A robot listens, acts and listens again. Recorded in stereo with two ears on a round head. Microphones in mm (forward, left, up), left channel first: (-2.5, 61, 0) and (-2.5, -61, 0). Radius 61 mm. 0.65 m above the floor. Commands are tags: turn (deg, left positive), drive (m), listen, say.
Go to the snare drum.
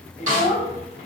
<turn deg="-55"/>
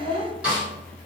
<turn deg="-10"/>
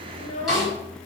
<drive m="1.0"/>
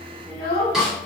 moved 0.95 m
<drive m="1.0"/>
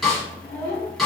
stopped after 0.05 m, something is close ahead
<say>I am next to the snare drum.</say>